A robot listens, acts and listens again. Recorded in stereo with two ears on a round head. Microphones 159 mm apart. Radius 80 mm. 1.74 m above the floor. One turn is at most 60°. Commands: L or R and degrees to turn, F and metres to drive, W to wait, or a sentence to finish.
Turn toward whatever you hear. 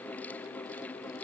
W
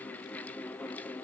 W
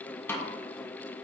L30
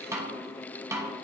R20
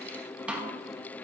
R10
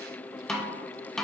Facing the snare drum.